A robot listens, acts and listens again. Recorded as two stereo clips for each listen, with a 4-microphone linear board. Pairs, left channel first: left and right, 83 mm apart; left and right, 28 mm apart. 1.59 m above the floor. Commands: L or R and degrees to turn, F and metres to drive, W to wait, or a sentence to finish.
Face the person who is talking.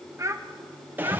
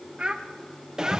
R35
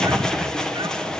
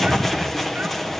W
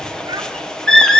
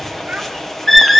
W
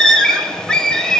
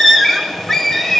I heard a child speaking, but can't make it out now. It was about straight ahead or 110° right.